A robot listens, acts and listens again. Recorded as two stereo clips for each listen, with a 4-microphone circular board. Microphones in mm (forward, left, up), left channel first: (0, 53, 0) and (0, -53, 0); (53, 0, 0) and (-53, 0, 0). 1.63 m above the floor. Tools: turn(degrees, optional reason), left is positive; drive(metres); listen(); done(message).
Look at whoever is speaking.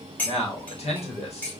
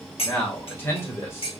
turn(degrees=65, reason="The man speaking: 65° left.")
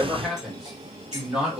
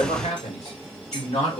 turn(degrees=-10, reason="The man speaking is now 10° right.")
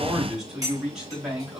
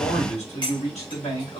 turn(degrees=-10, reason="The man speaking is now 10° right.")
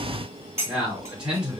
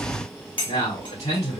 turn(degrees=-10, reason="The man speaking is now 10° right.")
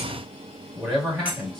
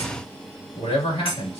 done("Facing the man speaking.")